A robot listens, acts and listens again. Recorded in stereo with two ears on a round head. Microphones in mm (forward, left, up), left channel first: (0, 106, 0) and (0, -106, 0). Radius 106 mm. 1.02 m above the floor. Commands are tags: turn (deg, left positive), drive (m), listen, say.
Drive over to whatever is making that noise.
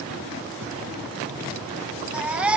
<turn deg="-30"/>
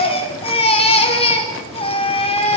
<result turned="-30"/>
<turn deg="25"/>
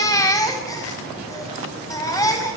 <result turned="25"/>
<turn deg="15"/>
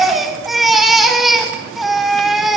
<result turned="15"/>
<drive m="1.0"/>
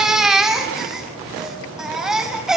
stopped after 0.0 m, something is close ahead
<say>Something is in my way. I am facing the baby crying but have not reached it.</say>